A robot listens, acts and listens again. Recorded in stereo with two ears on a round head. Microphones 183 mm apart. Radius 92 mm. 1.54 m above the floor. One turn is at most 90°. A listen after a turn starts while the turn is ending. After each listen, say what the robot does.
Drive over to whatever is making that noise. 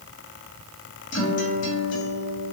Turn 65° left.
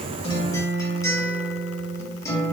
Turn 20° left.
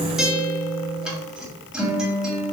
Drive 1.0 m forward.
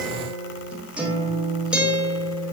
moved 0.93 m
Drive 1.0 m forward.
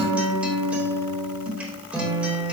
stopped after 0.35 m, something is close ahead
Turn 10° right.
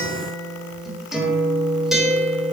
I am next to the guitar.